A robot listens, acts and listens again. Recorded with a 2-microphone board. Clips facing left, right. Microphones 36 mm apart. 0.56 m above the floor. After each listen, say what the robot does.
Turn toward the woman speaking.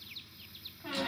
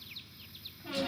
Keep listening.
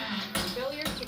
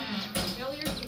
Turn 60° left.
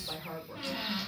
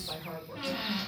Found it: a woman speaking, straight ahead.